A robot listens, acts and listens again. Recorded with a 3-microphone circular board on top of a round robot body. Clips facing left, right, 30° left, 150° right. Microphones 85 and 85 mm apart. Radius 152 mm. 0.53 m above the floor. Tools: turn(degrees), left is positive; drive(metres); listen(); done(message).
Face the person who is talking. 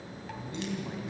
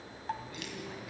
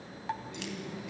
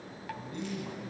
turn(degrees=160)
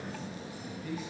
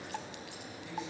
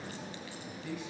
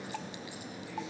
turn(degrees=50)
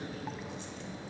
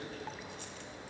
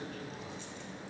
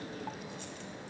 listen()
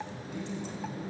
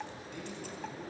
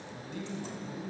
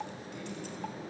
turn(degrees=10)
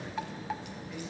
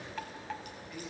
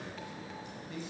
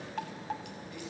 listen()
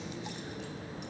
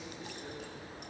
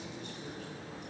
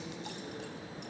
listen()
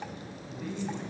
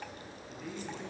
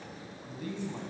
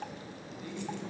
done("Found it: a man speaking, straight ahead.")